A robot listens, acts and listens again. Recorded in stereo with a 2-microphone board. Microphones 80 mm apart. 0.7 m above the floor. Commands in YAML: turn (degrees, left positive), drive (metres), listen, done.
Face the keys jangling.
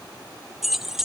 turn: -30
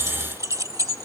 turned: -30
turn: -135
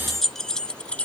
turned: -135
turn: 15
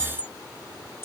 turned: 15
turn: 30
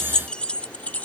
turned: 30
turn: 20
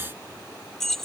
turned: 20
done: "Facing the keys jangling."